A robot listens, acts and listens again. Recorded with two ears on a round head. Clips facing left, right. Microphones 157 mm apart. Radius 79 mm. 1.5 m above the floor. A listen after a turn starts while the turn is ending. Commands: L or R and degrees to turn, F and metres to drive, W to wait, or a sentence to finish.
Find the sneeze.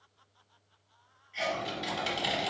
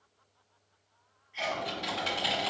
L60
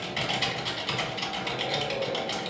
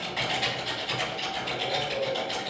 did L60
W
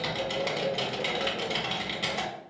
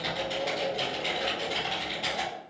I heard a sneeze, but can't make it out now. It was about straight ahead or 60° left.